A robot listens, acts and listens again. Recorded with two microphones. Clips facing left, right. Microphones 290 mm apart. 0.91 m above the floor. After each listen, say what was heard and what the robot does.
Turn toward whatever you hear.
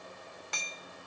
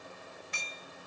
Turn 90° left.
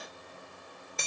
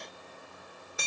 Found it: hammering, straight ahead.